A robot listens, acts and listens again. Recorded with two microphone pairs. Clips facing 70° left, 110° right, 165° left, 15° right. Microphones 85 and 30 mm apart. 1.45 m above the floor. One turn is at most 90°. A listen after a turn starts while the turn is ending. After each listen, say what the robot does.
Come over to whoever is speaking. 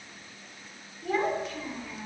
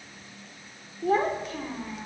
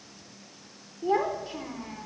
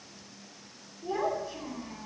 Turn 90° right.
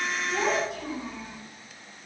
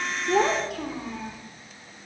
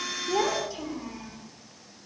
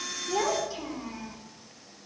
Turn 90° right.
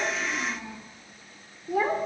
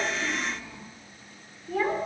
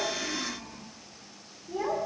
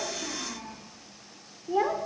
Drive 1.0 m forward.
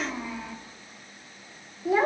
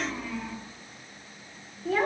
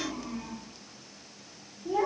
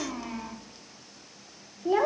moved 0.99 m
Drive 1.0 m forward.
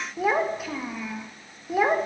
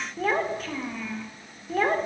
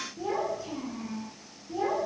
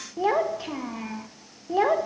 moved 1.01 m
Turn 15° right.
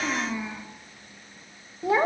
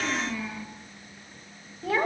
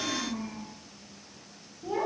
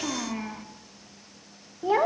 Drive 1.0 m forward.
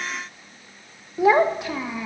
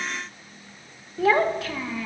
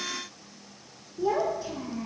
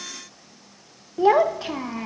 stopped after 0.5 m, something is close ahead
Arrived at the child speaking, straight ahead.